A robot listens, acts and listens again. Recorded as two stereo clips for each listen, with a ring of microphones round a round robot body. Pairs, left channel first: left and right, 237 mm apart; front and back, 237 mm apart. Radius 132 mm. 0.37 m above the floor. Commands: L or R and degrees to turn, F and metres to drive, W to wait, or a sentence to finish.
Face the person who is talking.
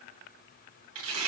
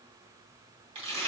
W
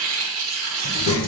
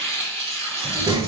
L110
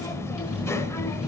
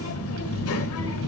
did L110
L10
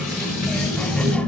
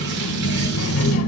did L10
Facing the child speaking, under 1 m away.